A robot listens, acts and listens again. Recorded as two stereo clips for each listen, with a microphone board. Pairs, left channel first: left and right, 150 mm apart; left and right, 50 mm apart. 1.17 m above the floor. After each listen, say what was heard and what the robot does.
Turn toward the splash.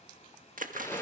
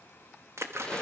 The splash: about 65° right or 115° right. Turn 65° right.
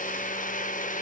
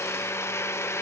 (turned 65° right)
Keep listening.
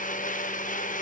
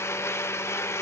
I heard a splash, but can't make it out now. It was about straight ahead or 50° right.